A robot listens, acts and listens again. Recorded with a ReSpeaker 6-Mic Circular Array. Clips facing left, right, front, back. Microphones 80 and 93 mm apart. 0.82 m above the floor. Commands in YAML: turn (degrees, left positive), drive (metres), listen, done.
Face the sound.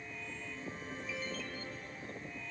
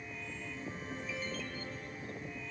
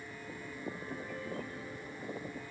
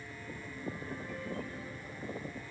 listen: true
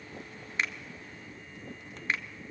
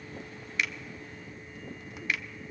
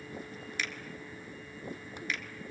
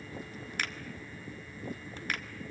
turn: 145
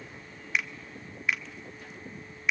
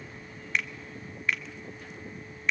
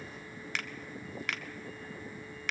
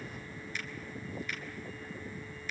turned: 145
done: "Found it: a finger snap, straight ahead."